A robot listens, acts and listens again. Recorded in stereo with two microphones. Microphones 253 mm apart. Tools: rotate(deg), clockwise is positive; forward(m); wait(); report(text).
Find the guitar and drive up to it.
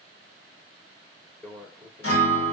rotate(-70)
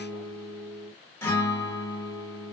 rotate(-10)
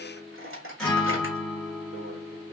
forward(1.0)
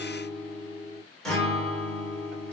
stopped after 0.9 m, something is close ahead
report("Arrived at the guitar, straight ahead.")